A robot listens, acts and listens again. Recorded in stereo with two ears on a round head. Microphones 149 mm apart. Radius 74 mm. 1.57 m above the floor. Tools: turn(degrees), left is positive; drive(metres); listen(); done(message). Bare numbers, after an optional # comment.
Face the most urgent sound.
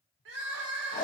turn(-90)
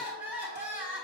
# So it is at 10° right.
turn(-10)
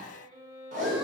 listen()
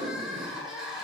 done("Found it: crying, straight ahead.")